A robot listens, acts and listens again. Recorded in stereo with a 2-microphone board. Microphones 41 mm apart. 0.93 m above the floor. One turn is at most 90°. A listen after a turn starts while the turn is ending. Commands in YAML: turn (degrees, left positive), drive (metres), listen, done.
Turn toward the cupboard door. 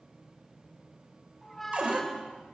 turn: -35
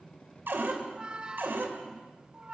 turn: -90
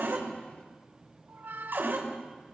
turn: -70
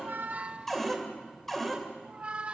done: "Facing the cupboard door, 2 to 4 m away."